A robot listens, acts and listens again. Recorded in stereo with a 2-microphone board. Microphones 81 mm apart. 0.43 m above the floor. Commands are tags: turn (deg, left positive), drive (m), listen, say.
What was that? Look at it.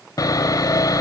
<turn deg="50"/>
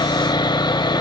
<turn deg="75"/>
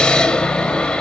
<turn deg="10"/>
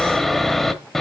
<say>Facing the sawing.</say>